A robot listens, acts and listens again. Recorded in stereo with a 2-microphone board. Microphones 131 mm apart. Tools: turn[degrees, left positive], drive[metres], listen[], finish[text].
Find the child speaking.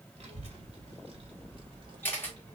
Thought: The child speaking: about 40° right or 140° right.
Action: turn[-40]
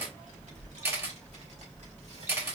Thought: So it is at 115° right.
Action: turn[-115]
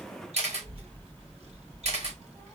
Thought: The child speaking is now 55° right.
Action: turn[-55]
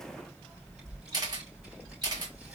Action: finish[Found it: a child speaking, straight ahead.]